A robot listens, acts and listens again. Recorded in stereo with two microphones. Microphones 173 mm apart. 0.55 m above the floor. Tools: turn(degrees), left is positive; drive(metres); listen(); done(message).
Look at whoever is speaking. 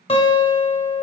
listen()
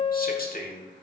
turn(degrees=60)
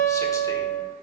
listen()
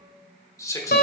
turn(degrees=20)
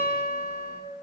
listen()
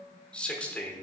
turn(degrees=10)
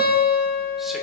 listen()
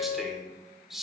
done("Found it: a man speaking, straight ahead, 1 to 2 m away.")